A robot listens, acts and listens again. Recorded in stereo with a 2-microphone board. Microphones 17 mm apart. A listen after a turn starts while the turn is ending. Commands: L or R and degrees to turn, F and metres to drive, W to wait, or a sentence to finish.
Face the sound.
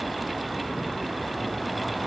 W
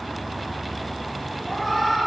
L20
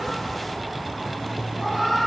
R10
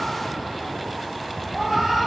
Facing the cat meowing, over 4 m away.